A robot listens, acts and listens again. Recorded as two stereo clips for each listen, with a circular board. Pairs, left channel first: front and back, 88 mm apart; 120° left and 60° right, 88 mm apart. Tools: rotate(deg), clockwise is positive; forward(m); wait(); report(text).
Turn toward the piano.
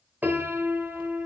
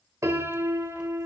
rotate(110)
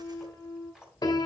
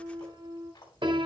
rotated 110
rotate(35)
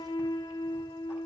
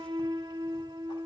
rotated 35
rotate(30)
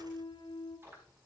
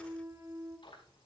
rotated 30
rotate(10)
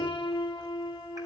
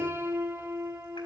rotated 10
report("Facing the piano.")